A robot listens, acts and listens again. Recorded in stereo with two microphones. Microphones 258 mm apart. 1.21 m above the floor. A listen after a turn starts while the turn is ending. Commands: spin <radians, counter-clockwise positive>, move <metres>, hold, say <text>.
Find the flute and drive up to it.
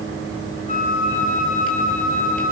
spin -0.61
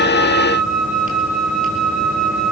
move 1.0
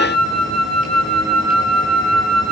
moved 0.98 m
move 1.0
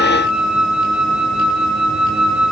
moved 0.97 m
move 1.0
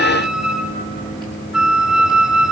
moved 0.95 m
move 1.0
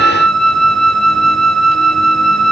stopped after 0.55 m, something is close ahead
say I am next to the flute.